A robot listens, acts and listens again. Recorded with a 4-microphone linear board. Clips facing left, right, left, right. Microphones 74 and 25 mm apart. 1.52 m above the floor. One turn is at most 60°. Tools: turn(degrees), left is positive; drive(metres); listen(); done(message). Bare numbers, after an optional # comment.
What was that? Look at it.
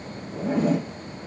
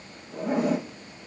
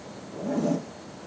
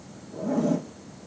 turn(-30)
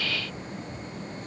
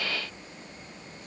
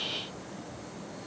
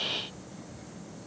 listen()
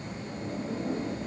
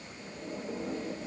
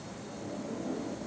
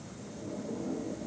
# So it is at 15° left.
turn(15)
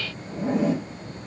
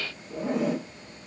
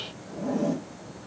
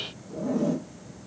done("Found it: a zipper, straight ahead, 1 to 2 m away.")